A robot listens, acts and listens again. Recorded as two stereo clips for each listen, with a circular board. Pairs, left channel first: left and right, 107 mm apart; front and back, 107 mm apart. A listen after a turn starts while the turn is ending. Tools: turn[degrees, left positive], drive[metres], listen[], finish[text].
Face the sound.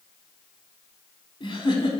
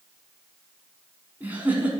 Thought: The giggle: 110° left.
Action: turn[110]
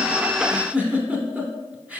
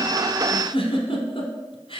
Thought: The giggle is now 15° right.
Action: turn[-15]
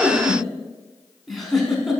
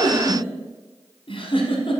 Action: finish[Found it: a giggle, straight ahead, under 1 m away.]